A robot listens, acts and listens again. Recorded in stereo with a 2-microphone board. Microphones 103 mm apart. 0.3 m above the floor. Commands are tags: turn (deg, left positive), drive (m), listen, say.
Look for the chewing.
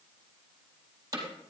<listen/>
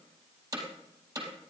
<listen/>
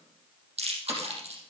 <turn deg="-70"/>
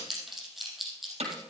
<say>Found it: chewing, straight ahead.</say>